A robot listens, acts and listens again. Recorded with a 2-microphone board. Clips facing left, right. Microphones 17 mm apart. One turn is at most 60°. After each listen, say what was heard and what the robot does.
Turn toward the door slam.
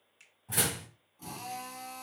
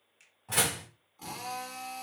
The door slam: about 55° right or 125° right. Turn 55° right.
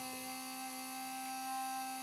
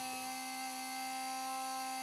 Keep listening.
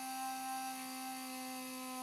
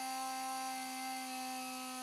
I heard a door slam, but can't make it out now. It was about straight ahead or 70° right.